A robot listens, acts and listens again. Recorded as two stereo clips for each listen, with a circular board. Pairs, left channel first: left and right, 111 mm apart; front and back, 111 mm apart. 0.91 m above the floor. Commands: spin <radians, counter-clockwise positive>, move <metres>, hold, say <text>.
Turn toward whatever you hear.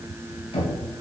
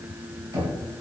spin 2.09
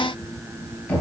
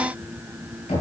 spin 0.17
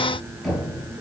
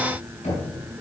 say Found it: knocking, straight ahead.